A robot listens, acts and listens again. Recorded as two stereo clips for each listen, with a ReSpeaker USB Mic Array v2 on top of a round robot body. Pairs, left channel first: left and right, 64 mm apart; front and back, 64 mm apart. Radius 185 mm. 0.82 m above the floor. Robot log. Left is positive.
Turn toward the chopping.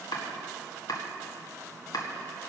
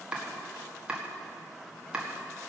note: The chopping: 105° left.
cmd yaw +105
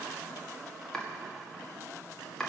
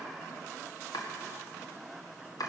note: The chopping is now 10° left.
cmd yaw +10
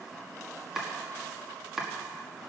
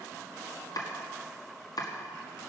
end: Found it: chopping, straight ahead, 1 to 2 m away.